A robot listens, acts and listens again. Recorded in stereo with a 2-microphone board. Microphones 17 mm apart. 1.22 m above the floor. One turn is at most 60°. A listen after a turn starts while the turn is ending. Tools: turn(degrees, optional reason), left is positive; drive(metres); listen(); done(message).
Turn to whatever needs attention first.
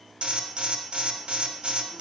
turn(degrees=-60)
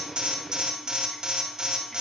turn(degrees=-45, reason="So it is at 45° right.")
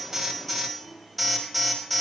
done("Found it: an alarm, straight ahead.")